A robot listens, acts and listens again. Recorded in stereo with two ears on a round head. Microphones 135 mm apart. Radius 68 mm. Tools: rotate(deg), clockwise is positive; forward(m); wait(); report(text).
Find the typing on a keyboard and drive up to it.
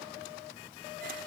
wait()
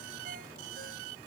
wait()
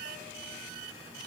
report("I can't make out typing on a keyboard.")